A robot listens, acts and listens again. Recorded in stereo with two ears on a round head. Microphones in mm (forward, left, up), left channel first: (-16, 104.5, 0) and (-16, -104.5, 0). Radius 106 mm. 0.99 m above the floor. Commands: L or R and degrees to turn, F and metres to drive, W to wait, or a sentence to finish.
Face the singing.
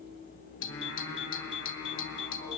L50
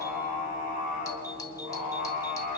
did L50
L80
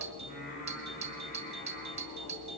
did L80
L35
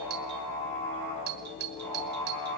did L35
L10
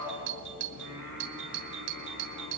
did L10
Found it: singing, straight ahead, over 4 m away.